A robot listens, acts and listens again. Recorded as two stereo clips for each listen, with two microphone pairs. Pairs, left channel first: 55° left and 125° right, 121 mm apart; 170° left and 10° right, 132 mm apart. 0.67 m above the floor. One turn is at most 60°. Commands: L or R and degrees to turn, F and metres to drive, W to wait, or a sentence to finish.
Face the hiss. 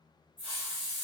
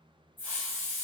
L60
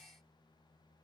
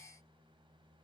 L30
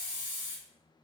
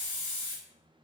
L10
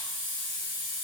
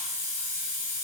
Facing the hiss, 1 to 2 m away.